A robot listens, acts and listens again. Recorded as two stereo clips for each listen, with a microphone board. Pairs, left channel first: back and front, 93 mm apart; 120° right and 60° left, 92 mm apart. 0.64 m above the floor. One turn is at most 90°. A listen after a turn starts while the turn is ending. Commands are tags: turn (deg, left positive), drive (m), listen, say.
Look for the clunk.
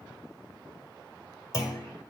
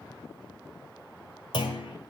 <turn deg="-90"/>
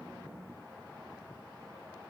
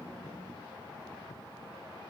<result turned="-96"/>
<turn deg="-35"/>
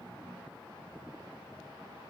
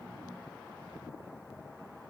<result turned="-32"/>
<say>I heard a clunk from this way, but can't make it out now.</say>